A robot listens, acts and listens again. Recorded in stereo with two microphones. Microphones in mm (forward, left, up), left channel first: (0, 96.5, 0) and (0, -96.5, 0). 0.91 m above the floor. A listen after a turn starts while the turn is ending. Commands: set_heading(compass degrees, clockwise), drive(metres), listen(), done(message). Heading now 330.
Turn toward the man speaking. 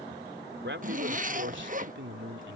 set_heading(40)
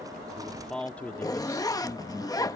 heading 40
set_heading(20)
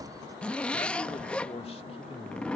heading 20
listen()
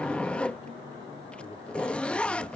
listen()
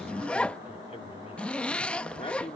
set_heading(350)
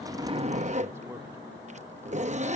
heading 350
listen()
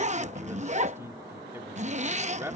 set_heading(5)
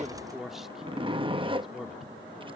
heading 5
done("Found it: a man speaking, straight ahead.")